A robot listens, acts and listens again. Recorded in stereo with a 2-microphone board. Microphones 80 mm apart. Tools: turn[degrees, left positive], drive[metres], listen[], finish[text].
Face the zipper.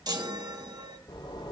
Thought: The zipper: about 70° left or 110° left.
Action: turn[70]
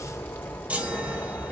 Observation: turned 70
Thought: So it is at 25° left.
Action: turn[25]
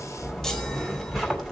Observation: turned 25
Action: finish[Facing the zipper, 2 to 4 m away.]